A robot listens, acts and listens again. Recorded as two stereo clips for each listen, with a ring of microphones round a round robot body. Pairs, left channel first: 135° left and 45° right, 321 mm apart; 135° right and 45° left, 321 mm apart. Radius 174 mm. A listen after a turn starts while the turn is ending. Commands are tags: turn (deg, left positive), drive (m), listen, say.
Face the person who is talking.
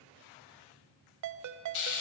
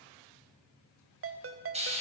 <listen/>
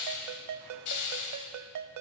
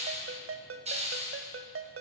<listen/>
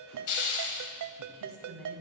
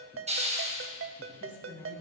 <turn deg="-55"/>
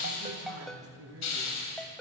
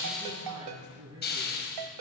<say>Found it: a man speaking, straight ahead.</say>